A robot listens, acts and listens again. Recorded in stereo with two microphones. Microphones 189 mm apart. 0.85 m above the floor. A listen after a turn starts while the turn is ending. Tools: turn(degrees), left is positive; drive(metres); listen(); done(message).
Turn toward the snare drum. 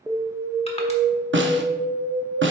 turn(degrees=-90)
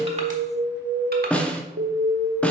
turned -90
done("Found it: a snare drum, straight ahead, under 1 m away.")